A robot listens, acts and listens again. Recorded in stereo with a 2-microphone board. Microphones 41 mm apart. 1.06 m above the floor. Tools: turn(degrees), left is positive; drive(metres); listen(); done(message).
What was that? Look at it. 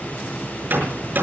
turn(degrees=-50)
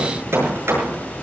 turn(degrees=-85)
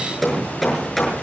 done("Facing the hammering.")